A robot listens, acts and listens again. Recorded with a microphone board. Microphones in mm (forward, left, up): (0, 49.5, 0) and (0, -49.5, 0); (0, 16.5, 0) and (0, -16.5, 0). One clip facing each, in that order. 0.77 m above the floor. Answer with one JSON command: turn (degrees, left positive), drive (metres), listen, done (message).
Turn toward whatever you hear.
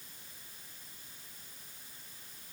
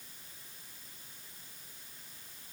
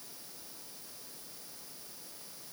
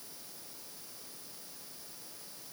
{"listen": true}
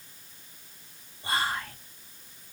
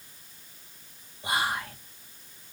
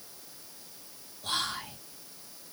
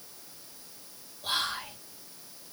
{"turn": -30}
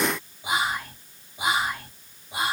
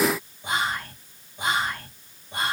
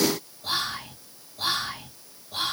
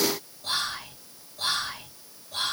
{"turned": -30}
{"turn": 10}
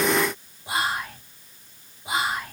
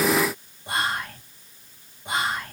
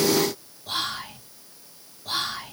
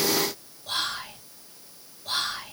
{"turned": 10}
{"done": "Facing the whispering."}